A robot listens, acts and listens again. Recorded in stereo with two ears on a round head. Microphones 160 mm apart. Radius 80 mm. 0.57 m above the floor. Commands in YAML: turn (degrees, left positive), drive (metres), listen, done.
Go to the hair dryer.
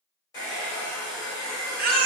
turn: 20
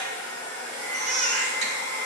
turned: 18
drive: 1.0
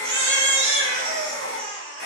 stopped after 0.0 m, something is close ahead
done: "Blocked. The hair dryer is further on, straight ahead."